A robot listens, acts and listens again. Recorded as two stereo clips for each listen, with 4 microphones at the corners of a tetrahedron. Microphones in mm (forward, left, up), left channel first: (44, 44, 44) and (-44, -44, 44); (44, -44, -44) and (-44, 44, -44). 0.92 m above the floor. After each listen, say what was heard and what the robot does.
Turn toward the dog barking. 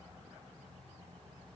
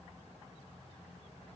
Keep listening.
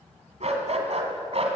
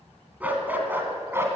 The dog barking: 160° right. Turn 160° right.
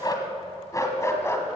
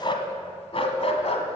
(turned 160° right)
The dog barking is now 20° right. Turn 20° right.
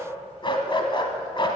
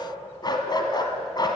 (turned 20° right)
Found it: a dog barking, straight ahead, 1 to 2 m away.